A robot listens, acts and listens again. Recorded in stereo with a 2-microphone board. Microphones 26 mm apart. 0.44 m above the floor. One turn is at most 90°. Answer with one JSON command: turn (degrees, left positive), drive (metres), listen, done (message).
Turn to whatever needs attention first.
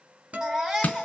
{"turn": -20}
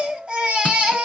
{"turn": -90}
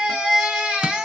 {"turn": -30}
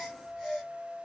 {"done": "Found it: a baby crying, straight ahead, 1 to 2 m away."}